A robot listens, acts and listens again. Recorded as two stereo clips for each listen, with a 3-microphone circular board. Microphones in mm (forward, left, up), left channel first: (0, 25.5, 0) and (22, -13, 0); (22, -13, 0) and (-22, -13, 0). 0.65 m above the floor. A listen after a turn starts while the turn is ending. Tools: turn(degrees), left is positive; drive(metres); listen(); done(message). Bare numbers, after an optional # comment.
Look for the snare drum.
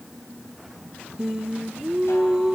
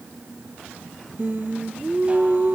listen()
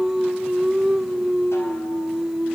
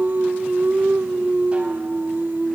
listen()
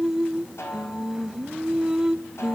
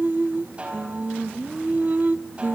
# The snare drum: 115° left.
turn(115)
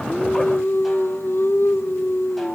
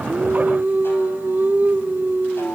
listen()
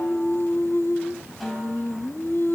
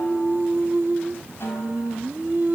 listen()
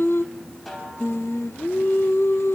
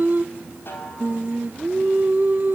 # The snare drum is now 30° left.
turn(30)
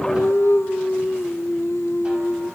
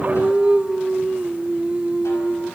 listen()
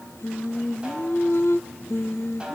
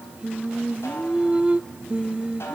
listen()
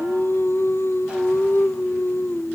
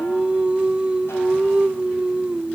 done("Facing where the snare drum came from. I can't hear it now.")